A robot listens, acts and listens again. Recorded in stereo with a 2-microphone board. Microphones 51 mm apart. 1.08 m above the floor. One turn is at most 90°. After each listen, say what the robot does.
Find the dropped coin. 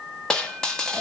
Turn 30° left.
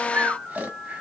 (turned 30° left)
Keep listening.
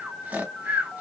I heard a dropped coin, but can't make it out now. It was about 15° right or 135° left.